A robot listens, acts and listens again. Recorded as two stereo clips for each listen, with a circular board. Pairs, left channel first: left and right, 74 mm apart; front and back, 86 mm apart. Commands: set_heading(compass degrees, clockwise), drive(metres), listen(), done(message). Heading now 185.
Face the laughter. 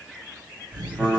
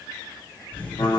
set_heading(255)
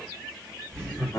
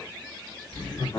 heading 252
set_heading(242)
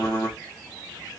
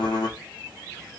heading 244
listen()
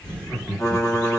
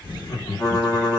set_heading(234)
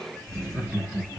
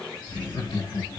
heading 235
set_heading(225)
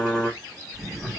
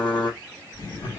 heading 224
done("Facing the laughter.")